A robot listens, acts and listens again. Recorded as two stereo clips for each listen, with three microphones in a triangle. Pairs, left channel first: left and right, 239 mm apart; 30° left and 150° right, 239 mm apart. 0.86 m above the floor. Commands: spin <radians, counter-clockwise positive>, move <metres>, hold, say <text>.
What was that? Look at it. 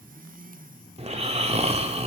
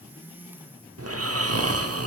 spin -2.71
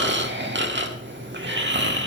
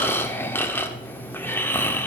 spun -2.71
spin -0.87
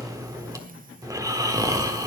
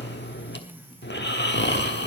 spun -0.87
spin -0.26
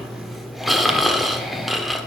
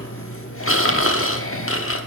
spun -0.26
say Facing the snoring.